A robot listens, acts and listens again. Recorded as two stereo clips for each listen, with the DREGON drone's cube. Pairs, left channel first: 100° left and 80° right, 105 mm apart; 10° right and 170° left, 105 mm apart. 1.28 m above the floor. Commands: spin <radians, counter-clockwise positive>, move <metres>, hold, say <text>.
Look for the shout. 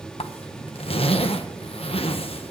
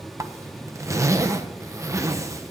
hold
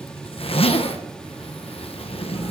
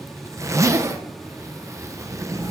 hold
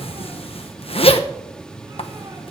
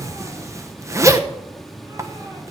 say I can't make out a shout, only a zipper.